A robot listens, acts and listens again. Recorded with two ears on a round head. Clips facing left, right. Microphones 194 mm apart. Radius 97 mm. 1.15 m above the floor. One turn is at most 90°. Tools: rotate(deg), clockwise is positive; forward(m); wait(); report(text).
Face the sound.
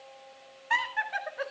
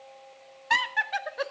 rotate(55)
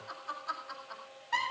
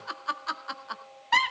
rotate(70)
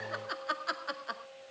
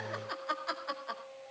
report("Found it: laughter, straight ahead.")